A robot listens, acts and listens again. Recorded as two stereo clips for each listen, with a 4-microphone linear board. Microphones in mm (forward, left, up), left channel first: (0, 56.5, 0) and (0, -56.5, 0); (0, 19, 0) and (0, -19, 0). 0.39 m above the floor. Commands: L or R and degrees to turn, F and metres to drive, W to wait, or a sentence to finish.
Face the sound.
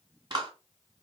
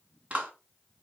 R40
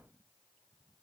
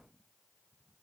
W
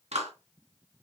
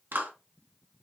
R100
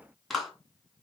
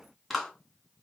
Found it: a clap, straight ahead, 2 to 4 m away.